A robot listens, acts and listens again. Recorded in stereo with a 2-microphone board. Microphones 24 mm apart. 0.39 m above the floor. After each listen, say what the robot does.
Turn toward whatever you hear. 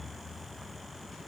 Keep listening.
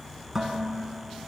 Turn 30° right.
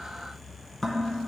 Turn 15° left.
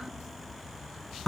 Facing the dishes clattering, 2 to 4 m away.